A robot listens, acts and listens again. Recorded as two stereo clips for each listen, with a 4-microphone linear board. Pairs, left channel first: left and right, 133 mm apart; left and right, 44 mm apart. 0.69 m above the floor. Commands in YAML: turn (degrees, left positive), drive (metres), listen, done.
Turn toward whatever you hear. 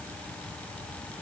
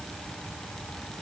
listen: true
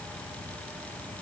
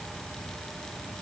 listen: true
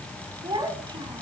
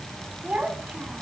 turn: -35
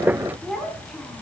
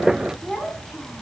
done: "Facing the child speaking."